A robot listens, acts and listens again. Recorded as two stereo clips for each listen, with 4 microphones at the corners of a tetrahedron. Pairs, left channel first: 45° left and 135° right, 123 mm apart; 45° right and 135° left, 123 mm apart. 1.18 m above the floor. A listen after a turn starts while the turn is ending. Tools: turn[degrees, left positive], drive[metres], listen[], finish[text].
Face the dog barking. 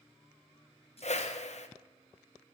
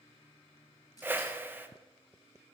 Action: listen[]
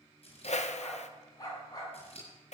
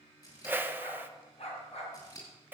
Thought: The dog barking: 10° right.
Action: turn[-10]
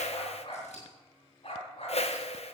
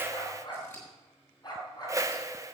Thought: The dog barking is now 10° left.
Action: turn[10]
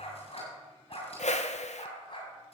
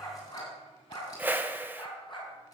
Action: finish[Facing the dog barking.]